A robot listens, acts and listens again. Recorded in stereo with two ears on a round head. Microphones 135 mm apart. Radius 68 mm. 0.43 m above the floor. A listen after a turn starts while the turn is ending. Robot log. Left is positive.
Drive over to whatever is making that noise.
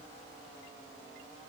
cmd idle
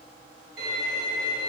note: The violin: about 75° right or 105° right.
cmd yaw -75
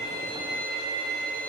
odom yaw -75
note: So it is at 30° right.
cmd yaw -30
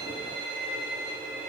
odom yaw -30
note: The violin is now 10° right.
cmd yaw -10
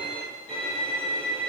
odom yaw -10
cmd fwd 1.0
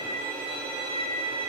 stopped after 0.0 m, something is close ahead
end: Something is in my way. I am facing the violin but have not reached it.